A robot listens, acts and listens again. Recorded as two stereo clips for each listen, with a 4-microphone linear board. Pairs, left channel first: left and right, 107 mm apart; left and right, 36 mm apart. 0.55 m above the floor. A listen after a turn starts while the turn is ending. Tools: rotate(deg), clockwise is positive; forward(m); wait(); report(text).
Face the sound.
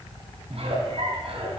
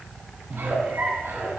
rotate(70)
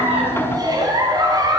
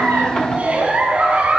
rotate(40)
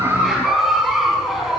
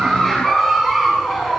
report("Facing the giggle.")